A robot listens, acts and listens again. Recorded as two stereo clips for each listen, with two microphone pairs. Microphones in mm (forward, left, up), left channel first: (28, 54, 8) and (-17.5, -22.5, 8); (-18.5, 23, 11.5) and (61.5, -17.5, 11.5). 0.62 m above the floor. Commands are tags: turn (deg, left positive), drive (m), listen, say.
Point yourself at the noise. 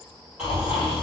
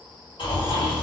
<turn deg="160"/>
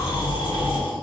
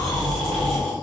<turn deg="65"/>
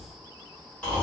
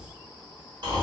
<turn deg="-15"/>
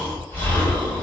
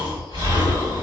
<say>Found it: snoring, straight ahead, 1 to 2 m away.</say>